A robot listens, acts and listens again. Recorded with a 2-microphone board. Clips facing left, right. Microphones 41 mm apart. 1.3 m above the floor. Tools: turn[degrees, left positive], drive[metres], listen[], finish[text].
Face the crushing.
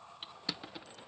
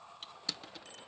Action: turn[30]
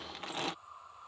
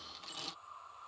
Thought: So it is at 135° left.
Action: turn[135]
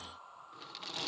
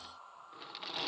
Thought: The crushing is now 10° right.
Action: turn[-10]
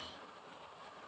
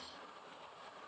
Action: listen[]
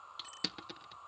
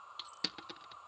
Action: finish[Found it: crushing, straight ahead.]